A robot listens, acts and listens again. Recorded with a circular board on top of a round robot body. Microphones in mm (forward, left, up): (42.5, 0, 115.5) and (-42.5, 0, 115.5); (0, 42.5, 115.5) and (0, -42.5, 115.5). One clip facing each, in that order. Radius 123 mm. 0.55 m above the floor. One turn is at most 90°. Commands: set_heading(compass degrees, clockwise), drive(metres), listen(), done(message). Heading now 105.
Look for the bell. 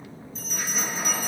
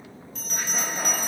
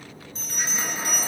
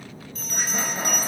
set_heading(15)
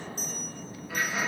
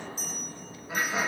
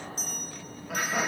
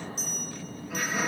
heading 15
set_heading(310)
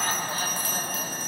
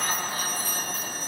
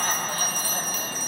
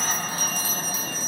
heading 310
set_heading(330)
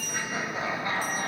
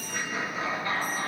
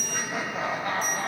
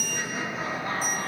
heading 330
done("Found it: a bell, straight ahead.")